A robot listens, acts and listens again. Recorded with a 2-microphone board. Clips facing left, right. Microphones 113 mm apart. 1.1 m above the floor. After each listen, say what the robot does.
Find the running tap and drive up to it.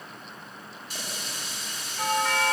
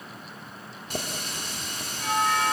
Turn 55° right.
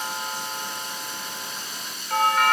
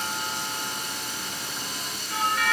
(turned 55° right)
Turn 70° right.
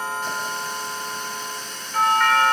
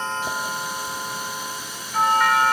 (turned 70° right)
Turn 10° right.
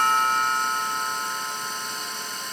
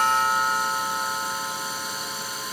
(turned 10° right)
Keep listening.
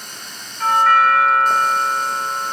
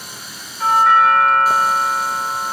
Turn 10° right.
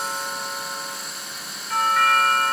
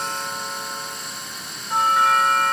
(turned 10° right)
Drive 1.0 m forward.
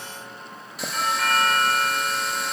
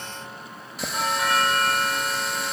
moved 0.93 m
Drive 1.0 m forward.
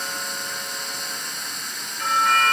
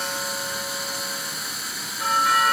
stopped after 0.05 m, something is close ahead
Arrived at the running tap, straight ahead.